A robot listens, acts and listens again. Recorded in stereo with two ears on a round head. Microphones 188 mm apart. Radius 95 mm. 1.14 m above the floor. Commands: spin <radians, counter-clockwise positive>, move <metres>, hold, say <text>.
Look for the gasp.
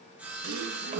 spin -1.31
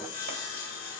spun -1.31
hold
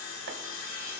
say I heard a gasp, but can't make it out now. It was about straight ahead or 30° right.